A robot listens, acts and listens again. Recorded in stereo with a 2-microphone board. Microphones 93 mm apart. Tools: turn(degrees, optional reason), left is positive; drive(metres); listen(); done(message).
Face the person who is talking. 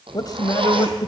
turn(degrees=50, reason="The man speaking: about 50° left or 130° left.")
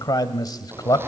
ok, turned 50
turn(degrees=65, reason="So it is at 65° left.")
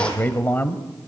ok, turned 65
turn(degrees=25, reason="The man speaking is now 25° left.")
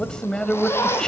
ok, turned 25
turn(degrees=10, reason="The man speaking is now 10° left.")
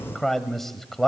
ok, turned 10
done("Facing the man speaking.")